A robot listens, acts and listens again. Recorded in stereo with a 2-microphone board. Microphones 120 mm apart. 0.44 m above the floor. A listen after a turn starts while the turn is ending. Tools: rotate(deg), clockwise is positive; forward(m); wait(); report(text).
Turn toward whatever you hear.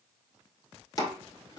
rotate(-30)
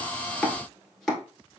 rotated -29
report("Facing the chopping, 1 to 2 m away.")